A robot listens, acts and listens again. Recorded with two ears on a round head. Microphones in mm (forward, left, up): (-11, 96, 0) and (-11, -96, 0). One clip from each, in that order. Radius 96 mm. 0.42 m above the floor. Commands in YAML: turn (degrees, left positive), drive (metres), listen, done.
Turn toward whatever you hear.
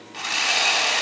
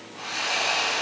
turn: 55
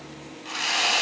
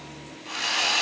done: "Found it: sawing, straight ahead, 2 to 4 m away."